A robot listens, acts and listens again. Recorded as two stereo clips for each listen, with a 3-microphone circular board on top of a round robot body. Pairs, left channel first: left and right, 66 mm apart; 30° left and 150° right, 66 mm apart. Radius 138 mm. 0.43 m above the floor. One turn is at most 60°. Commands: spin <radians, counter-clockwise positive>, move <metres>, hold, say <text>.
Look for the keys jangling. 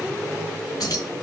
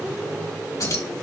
spin 1.05
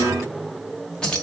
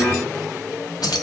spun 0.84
spin 0.26
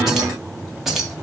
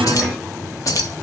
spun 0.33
say Facing the keys jangling, 2 to 4 m away.